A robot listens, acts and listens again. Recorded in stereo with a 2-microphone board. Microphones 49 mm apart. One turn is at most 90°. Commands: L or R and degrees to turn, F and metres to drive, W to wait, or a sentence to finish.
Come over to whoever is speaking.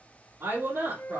R75
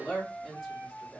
F1.0
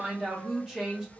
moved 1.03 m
R10
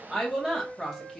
F1.0
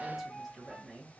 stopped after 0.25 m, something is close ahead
W
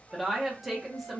Arrived at the woman speaking, straight ahead.